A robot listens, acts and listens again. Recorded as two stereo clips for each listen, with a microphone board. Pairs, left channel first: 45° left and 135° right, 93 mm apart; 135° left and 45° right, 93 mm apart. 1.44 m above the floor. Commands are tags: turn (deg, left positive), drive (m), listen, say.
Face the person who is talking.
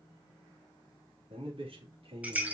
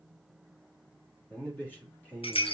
<turn deg="-150"/>
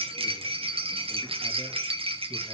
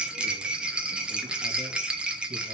<listen/>
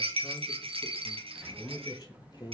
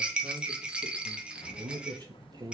<say>Found it: a man speaking, straight ahead.</say>